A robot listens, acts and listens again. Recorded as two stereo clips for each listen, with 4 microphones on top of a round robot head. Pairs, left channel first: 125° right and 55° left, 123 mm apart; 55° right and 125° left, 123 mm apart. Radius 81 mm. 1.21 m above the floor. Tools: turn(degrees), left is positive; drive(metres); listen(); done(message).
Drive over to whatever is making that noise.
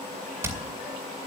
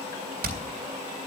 turn(degrees=125)
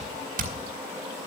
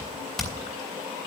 turn(degrees=35)
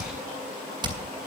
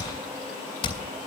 drive(metres=1.0)
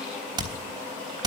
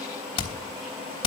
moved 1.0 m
drive(metres=1.0)
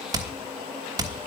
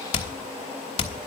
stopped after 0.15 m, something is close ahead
turn(degrees=-10)
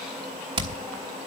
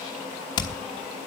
done("I am next to the hammering.")